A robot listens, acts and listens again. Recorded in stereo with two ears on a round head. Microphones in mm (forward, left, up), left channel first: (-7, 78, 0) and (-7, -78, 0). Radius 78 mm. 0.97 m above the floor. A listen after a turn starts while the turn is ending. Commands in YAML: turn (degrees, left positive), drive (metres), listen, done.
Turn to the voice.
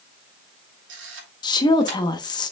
turn: 25
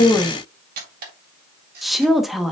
done: "Facing the woman speaking, 1 to 2 m away."